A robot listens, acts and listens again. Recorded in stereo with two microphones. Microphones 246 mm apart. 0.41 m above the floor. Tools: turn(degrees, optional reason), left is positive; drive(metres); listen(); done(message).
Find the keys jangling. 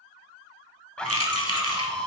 turn(degrees=-90)
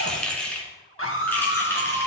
done("Found it: keys jangling, straight ahead, 2 to 4 m away.")